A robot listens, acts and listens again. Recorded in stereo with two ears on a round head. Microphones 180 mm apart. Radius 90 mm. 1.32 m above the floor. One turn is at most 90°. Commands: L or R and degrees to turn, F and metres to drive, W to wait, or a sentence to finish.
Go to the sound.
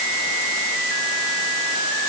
W
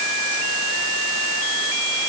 W
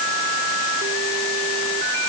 I can't make out anything to turn to.